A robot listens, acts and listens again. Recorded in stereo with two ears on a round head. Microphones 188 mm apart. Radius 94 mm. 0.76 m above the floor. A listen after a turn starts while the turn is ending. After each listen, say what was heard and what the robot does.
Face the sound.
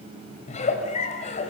The giggle: about 35° left or 145° left. Turn 35° left.
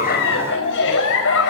So it is at 110° left. Turn 110° left.
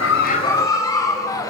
The giggle is now 15° left. Turn 15° left.
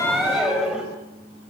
Found it: a giggle, straight ahead, over 4 m away.